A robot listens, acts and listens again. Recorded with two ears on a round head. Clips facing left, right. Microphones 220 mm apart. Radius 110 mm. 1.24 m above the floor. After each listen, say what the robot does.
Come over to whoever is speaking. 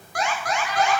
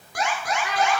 Turn 60° right.
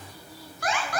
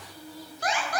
Turn 60° right.
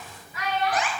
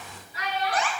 Turn 30° right.
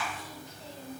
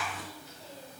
Drive 1.0 m forward.
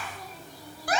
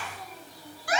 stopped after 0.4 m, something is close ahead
Keep listening.
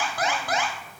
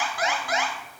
Keep listening.
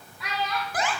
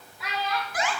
Something is in my way. I am facing the child speaking but have not reached it.